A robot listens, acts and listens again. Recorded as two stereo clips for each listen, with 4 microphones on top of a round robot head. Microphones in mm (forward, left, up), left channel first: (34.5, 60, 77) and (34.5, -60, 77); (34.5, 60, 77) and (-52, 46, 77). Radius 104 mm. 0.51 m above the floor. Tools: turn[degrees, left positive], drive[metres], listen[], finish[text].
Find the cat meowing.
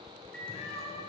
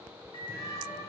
Thought: The cat meowing: 60° left.
Action: turn[60]
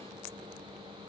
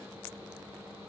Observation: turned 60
Action: listen[]
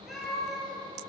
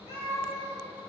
Action: finish[Found it: a cat meowing, straight ahead, 2 to 4 m away.]